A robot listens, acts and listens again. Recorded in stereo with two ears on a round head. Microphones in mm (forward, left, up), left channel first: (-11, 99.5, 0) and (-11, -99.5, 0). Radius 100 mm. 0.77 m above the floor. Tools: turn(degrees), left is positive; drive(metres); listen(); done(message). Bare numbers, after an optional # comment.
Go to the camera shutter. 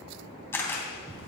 turn(30)
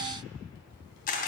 # So it is at 140° left.
turn(140)
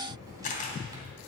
# The camera shutter is now 35° left.
turn(35)
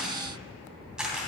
drive(1.0)
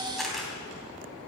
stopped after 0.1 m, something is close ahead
done("Something is in my way. I am facing the camera shutter but have not reached it.")